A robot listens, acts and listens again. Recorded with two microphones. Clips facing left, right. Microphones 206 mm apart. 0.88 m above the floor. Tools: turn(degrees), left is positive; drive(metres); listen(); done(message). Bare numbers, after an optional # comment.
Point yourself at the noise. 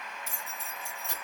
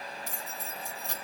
# The keys jangling: about 35° right or 145° right.
turn(-35)
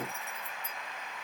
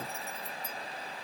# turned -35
listen()
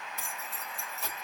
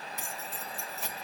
done("Facing the keys jangling, 2 to 4 m away.")